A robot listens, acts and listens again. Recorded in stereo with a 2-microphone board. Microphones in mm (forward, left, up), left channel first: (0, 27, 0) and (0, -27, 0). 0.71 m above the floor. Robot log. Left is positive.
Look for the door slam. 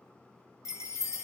cmd idle
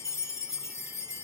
cmd idle
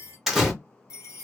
cmd yaw -30
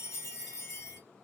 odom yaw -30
cmd idle
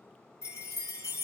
end: I heard a door slam, but can't make it out now. It was about 25° left or 145° right.